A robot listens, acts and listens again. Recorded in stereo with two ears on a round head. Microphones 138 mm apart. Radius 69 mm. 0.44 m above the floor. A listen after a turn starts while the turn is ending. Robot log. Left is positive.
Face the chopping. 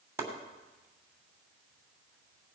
note: The chopping: about 15° right or 165° right.
cmd yaw -15
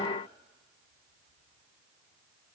cmd idle
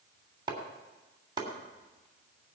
note: So it is at 150° right.
cmd yaw -150
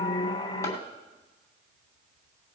cmd idle
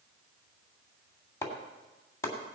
note: The chopping is now 20° left.
cmd yaw +20
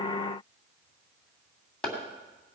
end: Found it: chopping, straight ahead, 2 to 4 m away.